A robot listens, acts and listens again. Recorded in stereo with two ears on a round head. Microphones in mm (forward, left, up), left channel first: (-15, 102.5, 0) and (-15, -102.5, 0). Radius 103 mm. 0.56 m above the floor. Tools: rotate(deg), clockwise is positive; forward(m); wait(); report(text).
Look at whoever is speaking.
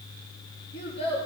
rotate(-30)
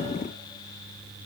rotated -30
wait()
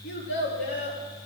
rotate(-120)
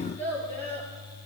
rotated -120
rotate(-10)
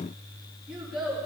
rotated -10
report("Facing the child speaking.")